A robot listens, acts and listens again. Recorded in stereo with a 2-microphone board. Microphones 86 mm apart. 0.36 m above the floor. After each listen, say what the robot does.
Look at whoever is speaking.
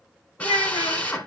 Turn 75° left.
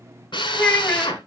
Turn 15° left.
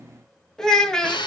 Facing the child speaking, 1 to 2 m away.